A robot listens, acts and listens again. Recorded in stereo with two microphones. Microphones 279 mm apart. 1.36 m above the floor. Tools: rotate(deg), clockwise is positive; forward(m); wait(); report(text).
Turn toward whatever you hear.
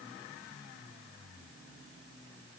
wait()
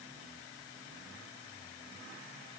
wait()
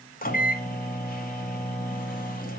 rotate(-30)
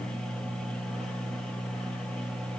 report("Facing the microwave.")